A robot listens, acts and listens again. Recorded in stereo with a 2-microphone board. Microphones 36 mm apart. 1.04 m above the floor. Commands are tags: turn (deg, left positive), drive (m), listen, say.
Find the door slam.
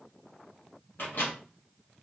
<listen/>
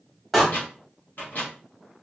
<turn deg="30"/>
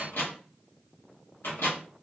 <listen/>
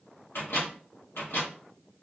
<say>I heard a door slam, but can't make it out now. It was about 20° right or 140° left.</say>